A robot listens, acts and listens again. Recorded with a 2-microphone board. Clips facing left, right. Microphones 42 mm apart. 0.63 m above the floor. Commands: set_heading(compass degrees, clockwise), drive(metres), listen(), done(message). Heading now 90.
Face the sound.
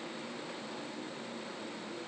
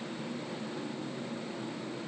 listen()
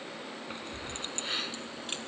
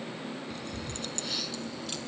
set_heading(60)
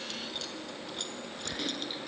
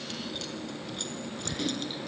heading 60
done("Found it: keys jangling, straight ahead.")